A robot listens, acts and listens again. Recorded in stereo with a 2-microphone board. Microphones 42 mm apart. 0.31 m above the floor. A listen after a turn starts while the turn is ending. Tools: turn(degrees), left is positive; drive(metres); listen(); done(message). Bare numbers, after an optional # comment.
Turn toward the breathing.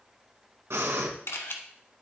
turn(-90)
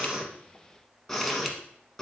# So it is at 10° left.
turn(10)
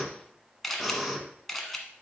done("Found it: breathing, straight ahead.")